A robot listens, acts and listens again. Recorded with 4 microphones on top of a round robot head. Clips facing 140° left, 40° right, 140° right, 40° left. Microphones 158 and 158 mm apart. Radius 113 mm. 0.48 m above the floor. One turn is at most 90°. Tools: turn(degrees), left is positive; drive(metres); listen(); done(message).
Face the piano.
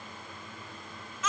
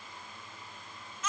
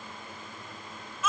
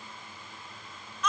listen()
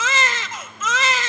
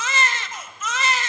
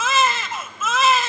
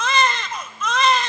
listen()
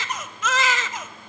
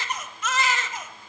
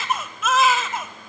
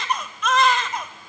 done("I can't make out a piano to turn to.")